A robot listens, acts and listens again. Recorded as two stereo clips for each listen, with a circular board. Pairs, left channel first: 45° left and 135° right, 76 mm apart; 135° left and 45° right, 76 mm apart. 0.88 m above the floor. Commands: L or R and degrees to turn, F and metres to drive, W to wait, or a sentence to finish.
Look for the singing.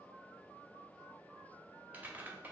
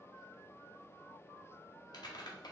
W
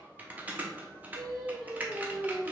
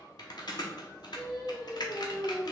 L155
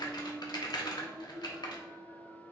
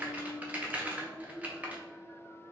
L45
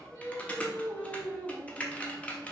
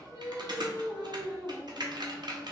R10
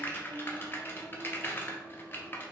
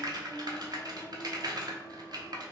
W
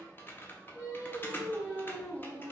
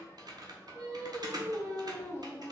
Found it: singing, straight ahead.